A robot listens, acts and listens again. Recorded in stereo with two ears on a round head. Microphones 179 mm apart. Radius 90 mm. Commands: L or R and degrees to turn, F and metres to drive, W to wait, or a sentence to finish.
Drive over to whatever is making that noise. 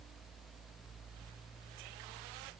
W
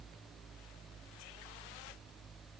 W
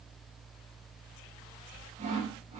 R40
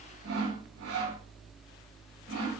R100
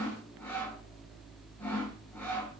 L10
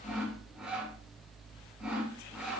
F1.0
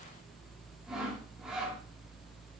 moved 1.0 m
F1.0
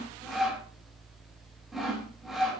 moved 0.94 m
F1.0
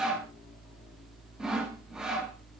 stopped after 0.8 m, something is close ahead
I am next to the sawing.